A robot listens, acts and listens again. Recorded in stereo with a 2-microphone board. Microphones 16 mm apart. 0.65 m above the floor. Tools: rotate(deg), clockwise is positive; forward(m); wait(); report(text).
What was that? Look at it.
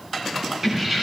rotate(20)
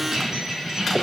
rotate(135)
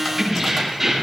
rotate(10)
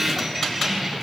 report("Found it: keys jangling, straight ahead, over 4 m away.")